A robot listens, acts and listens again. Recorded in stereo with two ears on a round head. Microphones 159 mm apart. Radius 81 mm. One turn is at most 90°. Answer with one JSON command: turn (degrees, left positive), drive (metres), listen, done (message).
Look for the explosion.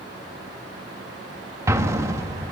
{"turn": -20}
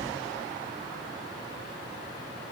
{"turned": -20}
{"listen": true}
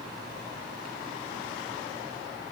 {"done": "I heard an explosion, but can't make it out now. It was about straight ahead or 140° right."}